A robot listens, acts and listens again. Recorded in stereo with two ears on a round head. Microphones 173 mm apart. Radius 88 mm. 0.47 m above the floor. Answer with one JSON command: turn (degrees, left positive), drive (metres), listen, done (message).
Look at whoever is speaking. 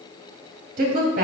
{"turn": -55}
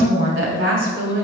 {"turn": -70}
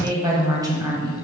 {"turn": -20}
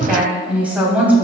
{"done": "Found it: a woman speaking, straight ahead, 2 to 4 m away."}